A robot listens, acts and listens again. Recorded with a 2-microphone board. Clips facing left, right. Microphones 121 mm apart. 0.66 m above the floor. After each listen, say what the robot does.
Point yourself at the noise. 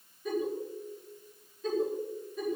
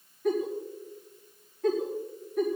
Turn 75° right.
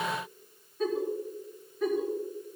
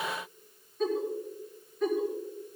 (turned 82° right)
Facing the giggle, over 4 m away.